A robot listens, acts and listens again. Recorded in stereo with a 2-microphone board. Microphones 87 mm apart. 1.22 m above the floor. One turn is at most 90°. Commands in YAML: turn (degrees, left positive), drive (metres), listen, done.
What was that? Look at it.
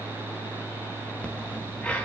turn: 30
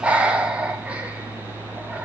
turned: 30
turn: -15
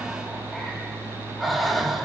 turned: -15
done: "Facing the breathing."